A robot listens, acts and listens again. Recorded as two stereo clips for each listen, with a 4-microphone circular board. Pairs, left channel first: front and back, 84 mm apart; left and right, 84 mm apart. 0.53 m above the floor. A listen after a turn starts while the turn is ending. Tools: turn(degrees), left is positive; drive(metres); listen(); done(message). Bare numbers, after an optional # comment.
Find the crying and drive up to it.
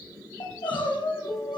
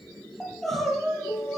drive(1.0)
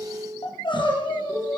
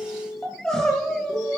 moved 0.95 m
# The crying is now 10° left.
turn(10)
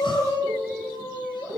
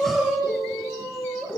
drive(1.0)
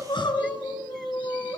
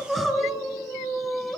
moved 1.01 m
drive(1.0)
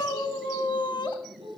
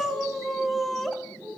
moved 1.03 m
drive(1.0)
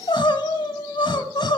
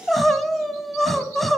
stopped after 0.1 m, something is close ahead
done("Arrived at the crying, straight ahead.")